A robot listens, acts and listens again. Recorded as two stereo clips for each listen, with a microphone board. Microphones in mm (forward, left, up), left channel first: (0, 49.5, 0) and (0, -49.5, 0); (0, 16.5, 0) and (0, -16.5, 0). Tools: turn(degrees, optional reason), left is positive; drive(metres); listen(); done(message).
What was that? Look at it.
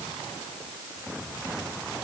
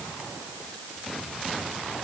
listen()
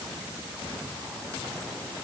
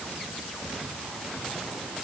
listen()
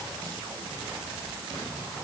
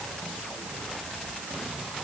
done("I can't make out anything.")